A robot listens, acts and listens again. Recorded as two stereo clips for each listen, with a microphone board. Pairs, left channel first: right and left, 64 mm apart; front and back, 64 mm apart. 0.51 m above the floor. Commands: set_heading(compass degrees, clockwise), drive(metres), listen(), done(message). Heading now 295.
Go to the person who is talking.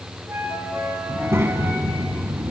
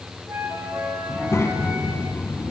set_heading(255)
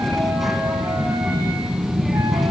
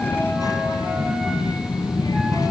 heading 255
drive(1.0)
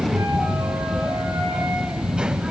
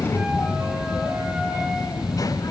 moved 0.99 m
set_heading(240)
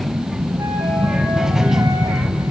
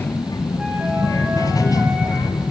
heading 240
set_heading(230)
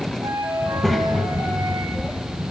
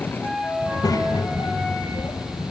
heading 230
drive(1.0)
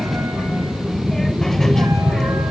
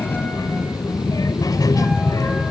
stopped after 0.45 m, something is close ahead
done("Arrived at the child speaking, straight ahead.")